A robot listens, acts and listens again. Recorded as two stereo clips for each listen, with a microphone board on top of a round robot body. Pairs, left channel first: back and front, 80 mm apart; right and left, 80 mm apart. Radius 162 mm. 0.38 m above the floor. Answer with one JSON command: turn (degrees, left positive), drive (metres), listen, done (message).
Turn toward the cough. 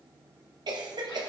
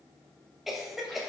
{"done": "Facing the cough, 2 to 4 m away."}